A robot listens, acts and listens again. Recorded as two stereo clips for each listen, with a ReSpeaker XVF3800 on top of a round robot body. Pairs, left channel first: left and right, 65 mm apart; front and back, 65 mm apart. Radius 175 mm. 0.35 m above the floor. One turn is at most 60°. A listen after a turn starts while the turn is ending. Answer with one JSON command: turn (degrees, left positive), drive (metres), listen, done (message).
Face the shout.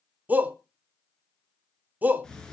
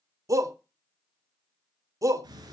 {"turn": -60}
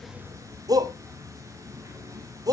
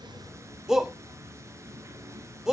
{"turn": -60}
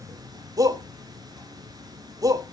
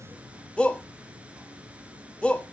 {"turn": -60}
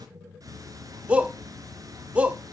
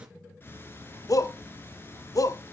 {"turn": -20}
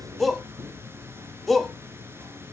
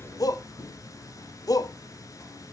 {"done": "Found it: a shout, straight ahead, 1 to 2 m away."}